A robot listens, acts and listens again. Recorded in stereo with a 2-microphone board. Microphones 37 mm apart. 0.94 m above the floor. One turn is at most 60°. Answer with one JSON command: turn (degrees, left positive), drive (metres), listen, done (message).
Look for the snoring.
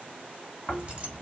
{"turn": 45}
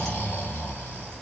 {"turn": 60}
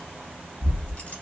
{"turn": 60}
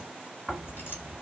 {"done": "Facing the snoring."}